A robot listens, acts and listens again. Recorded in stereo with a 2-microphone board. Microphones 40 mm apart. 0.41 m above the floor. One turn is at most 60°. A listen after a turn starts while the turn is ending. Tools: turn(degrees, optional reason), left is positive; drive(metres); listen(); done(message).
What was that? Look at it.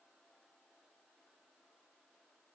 listen()
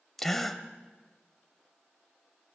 turn(degrees=30)
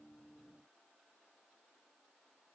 listen()
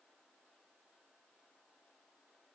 done("I heard a gasp, but can't make it out now. It was about 20° right or 140° left.")